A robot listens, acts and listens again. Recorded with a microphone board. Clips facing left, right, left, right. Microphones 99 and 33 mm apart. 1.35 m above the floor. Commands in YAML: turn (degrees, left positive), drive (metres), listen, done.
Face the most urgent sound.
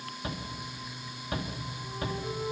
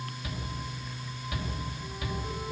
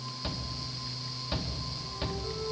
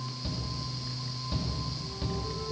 turn: 40
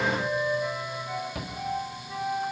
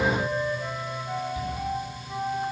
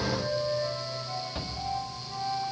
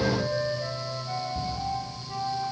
turn: 100
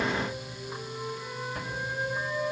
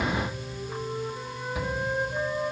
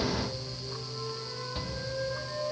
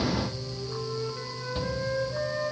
done: "Facing the shout."